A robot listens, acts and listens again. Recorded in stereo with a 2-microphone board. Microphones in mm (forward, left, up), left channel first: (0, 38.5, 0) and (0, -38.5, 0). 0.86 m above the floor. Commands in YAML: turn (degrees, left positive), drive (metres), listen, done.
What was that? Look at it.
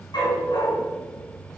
turn: 70
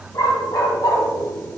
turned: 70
turn: 50
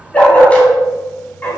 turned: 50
turn: 20
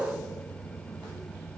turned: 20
listen: true
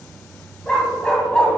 turn: 10
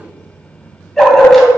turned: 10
done: "Facing the dog barking."